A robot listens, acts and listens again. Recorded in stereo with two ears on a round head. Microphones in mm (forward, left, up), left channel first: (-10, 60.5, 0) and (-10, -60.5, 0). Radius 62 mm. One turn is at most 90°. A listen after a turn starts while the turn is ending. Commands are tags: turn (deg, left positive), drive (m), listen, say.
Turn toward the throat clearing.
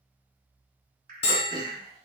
<turn deg="-35"/>
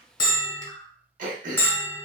<turn deg="-90"/>
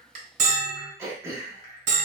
<turn deg="-20"/>
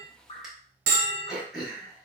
<say>Found it: throat clearing, straight ahead, under 1 m away.</say>